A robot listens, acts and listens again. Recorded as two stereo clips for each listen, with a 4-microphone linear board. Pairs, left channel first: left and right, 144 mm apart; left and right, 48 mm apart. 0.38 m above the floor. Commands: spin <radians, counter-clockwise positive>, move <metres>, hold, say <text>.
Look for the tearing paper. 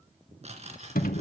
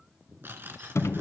spin -0.87
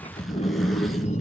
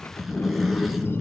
hold
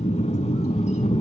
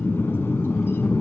hold
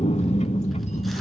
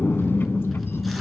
say I heard tearing paper, but can't make it out now. It was about straight ahead or 80° right.